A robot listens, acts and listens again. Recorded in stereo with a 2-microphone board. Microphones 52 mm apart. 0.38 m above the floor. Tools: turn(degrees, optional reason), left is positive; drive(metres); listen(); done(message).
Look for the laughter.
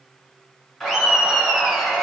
turn(degrees=30)
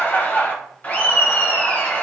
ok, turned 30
turn(degrees=140, reason="So it is at 140° left.")
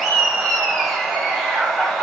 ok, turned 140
done("Found it: laughter, straight ahead.")